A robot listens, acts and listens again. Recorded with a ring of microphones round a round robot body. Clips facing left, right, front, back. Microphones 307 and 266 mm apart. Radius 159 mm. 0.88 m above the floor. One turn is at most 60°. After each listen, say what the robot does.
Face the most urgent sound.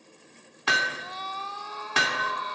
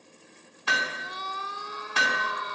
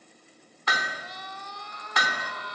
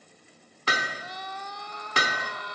Turn 60° right.
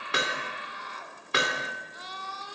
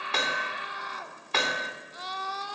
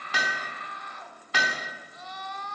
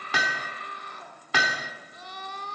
Turn 60° right.
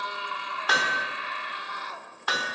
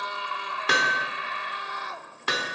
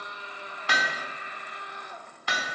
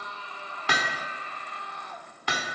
Turn 60° right.
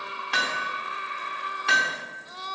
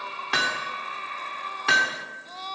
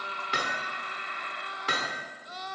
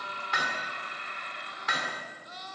Turn 15° left.
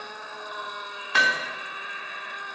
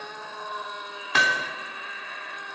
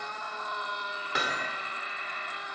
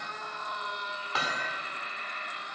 Facing the scream, 2 to 4 m away.